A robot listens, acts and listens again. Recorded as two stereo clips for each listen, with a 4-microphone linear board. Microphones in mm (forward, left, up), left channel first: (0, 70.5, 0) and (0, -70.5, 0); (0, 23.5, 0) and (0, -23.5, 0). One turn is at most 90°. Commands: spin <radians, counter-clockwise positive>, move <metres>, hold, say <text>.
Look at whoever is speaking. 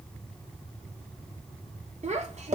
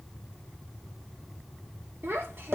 spin -0.96
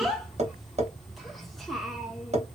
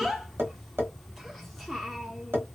say Facing the child speaking, under 1 m away.